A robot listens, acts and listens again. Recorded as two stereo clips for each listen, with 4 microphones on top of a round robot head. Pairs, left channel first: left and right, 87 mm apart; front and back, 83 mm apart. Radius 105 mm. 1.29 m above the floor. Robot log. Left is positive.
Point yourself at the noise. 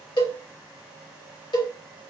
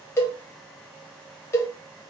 note: The cowbell: 55° left.
cmd yaw +55
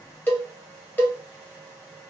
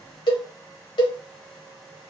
note: The cowbell is now 25° left.
cmd yaw +25
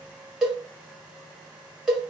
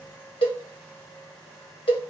end: Facing the cowbell, 1 to 2 m away.